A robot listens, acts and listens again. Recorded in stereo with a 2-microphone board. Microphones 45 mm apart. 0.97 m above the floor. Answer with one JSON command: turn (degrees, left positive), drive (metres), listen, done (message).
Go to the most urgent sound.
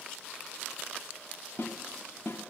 {"listen": true}
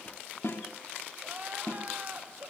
{"turn": -35}
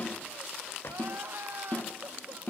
{"turn": -110}
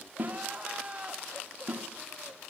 {"turn": -30}
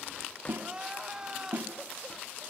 {"turn": -20}
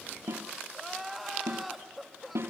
{"drive": 1.0}
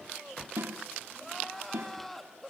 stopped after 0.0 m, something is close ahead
{"turn": 10}
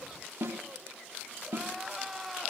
{"done": "Something is in my way. I am facing the crying but have not reached it."}